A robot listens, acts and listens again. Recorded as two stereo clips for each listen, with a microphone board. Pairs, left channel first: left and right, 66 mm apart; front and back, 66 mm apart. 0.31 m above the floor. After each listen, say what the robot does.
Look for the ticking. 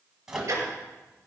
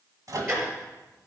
Turn 135° right.
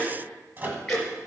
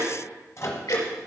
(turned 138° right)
Found it: ticking, straight ahead, over 4 m away.